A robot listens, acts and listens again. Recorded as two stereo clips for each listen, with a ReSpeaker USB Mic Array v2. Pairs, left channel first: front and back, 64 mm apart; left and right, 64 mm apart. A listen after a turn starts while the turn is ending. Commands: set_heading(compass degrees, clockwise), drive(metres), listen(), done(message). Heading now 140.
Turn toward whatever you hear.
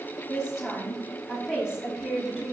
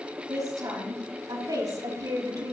set_heading(245)
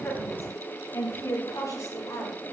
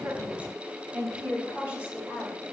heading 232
set_heading(257)
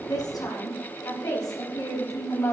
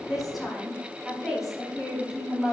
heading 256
set_heading(266)
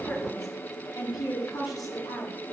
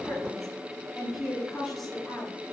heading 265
done("Found it: a woman speaking, straight ahead.")